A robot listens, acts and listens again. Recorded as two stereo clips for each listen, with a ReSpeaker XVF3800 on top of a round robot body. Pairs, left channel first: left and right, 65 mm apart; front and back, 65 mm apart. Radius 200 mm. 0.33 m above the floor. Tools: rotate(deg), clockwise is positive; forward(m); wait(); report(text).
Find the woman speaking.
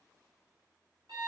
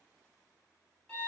wait()
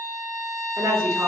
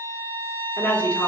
rotate(65)
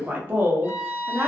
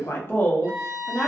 rotate(65)
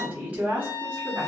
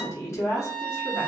rotate(30)
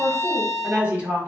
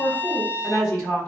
rotate(25)
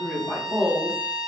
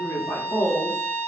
report("Facing the woman speaking, 1 to 2 m away.")